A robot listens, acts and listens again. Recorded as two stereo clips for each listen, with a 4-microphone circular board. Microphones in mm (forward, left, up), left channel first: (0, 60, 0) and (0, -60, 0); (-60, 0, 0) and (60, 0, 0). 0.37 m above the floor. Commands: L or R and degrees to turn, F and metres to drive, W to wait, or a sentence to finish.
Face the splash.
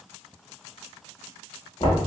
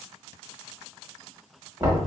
W
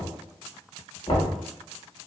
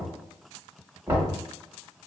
W
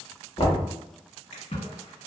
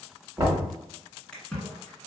L100
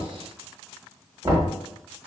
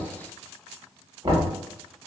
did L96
I heard a splash from this way, but can't make it out now.